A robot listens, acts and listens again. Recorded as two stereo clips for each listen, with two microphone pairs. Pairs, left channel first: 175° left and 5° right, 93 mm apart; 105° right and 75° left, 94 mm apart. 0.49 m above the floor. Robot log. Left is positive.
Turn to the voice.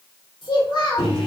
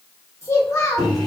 note: The child speaking: 155° right.
cmd yaw -155
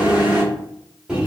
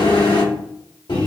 cmd idle
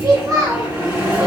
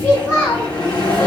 note: The child speaking is now 45° right.
cmd yaw -45
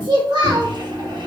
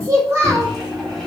note: The child speaking is now 25° left.
cmd yaw +25
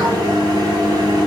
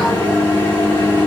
cmd idle
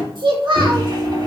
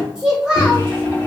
end: Facing the child speaking.